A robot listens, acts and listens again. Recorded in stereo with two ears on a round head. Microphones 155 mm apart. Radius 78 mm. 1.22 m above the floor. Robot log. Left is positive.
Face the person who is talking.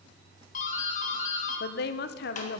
note: The woman speaking: about 60° left or 120° left.
cmd yaw +60
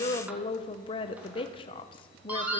note: So it is at 35° left.
cmd yaw +35
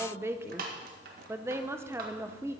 note: The woman speaking is now 15° right.
cmd yaw -15
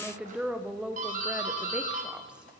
end: Facing the woman speaking, under 1 m away.